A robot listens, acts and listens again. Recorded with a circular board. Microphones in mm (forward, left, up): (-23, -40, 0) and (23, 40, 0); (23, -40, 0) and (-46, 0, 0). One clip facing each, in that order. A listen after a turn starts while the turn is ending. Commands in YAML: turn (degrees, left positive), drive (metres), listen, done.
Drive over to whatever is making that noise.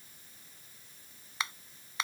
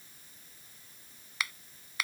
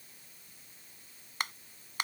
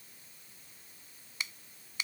turn: -60
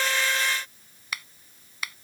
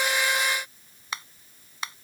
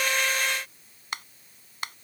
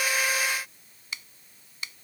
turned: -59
drive: 1.0
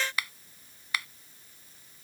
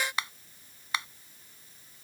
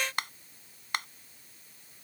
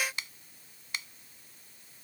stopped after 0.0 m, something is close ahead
done: "Blocked. The finger snap is further on, straight ahead."